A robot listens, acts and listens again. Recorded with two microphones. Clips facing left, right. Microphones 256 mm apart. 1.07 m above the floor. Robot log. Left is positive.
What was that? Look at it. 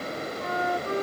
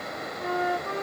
note: The flute: about 40° left or 140° left.
cmd yaw +40
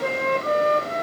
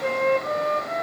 note: So it is at 100° left.
cmd yaw +100
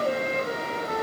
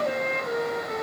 end: Found it: a flute, straight ahead, 1 to 2 m away.